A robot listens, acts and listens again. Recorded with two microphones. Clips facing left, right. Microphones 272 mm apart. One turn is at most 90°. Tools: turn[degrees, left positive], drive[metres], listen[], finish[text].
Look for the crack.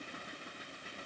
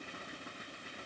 Action: listen[]
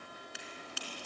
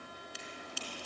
Thought: The crack: about 70° left or 110° left.
Action: turn[70]
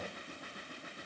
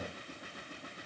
Action: listen[]
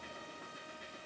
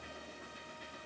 Action: finish[I heard a crack, but can't make it out now. It was about straight ahead or 40° left.]